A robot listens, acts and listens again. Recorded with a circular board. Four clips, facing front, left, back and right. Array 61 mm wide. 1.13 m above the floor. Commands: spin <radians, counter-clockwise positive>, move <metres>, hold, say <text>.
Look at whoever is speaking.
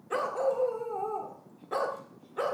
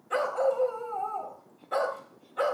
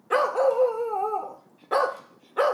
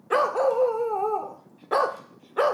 hold
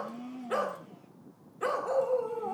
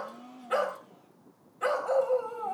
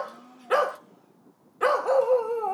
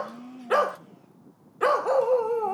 hold
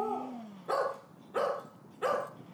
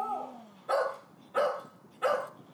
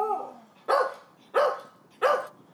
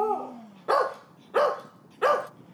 say I can't make out anyone speaking to turn to.